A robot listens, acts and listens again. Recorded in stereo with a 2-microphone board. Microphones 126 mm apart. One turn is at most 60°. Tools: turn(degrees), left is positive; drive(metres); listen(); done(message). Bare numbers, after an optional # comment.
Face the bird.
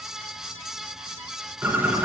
# The bird: about 15° right or 165° right.
turn(-15)
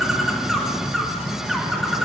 done("Found it: a bird, straight ahead, 1 to 2 m away.")